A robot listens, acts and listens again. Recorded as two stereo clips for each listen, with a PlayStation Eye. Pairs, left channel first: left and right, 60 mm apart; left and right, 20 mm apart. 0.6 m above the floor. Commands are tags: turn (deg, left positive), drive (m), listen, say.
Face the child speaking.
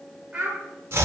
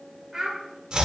<turn deg="-20"/>
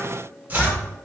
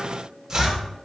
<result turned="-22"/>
<listen/>
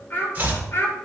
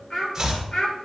<turn deg="45"/>
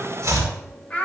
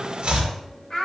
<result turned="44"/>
<turn deg="25"/>
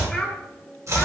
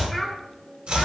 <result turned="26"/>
<say>Facing the child speaking, 2 to 4 m away.</say>